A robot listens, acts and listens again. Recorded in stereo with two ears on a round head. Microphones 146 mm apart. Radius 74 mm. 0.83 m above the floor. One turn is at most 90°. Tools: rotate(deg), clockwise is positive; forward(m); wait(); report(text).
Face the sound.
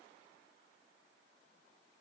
wait()
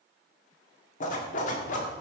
rotate(-50)
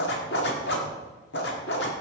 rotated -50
rotate(-75)
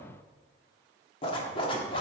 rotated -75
rotate(-30)
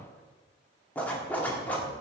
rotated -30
rotate(-10)
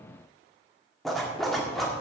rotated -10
report("Facing the zipper.")